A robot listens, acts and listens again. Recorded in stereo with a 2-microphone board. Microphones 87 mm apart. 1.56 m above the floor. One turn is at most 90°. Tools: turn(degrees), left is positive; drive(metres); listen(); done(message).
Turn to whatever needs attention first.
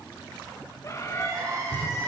turn(degrees=-40)
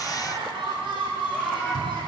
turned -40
turn(degrees=-90)
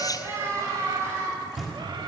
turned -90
turn(degrees=-35)
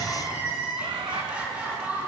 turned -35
turn(degrees=-15)
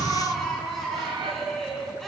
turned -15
done("Found it: crying, straight ahead.")